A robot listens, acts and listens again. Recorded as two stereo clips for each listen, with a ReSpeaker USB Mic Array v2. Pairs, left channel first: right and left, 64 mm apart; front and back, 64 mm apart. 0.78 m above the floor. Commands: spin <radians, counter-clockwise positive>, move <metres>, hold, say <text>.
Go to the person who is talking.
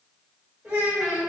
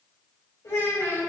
spin 0.44
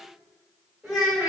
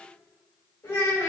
move 1.0
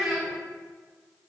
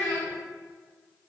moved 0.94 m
move 1.0
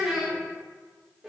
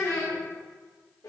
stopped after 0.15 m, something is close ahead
say Arrived at the child speaking, straight ahead.